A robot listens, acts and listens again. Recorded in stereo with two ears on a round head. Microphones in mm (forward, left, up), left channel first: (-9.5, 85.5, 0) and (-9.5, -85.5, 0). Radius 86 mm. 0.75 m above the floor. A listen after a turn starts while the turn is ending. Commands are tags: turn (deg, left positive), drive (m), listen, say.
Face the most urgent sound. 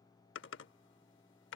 <listen/>
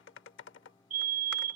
<turn deg="-40"/>
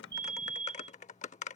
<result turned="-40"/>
<say>Found it: a fire alarm, straight ahead.</say>